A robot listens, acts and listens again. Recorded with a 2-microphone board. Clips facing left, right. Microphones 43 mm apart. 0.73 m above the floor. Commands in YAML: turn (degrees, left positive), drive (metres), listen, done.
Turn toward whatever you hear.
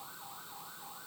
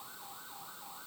listen: true
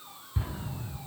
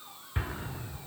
turn: -55
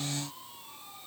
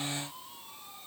listen: true
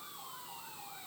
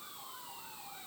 done: "I heard an explosion, but can't make it out now. It was about straight ahead or 70° right."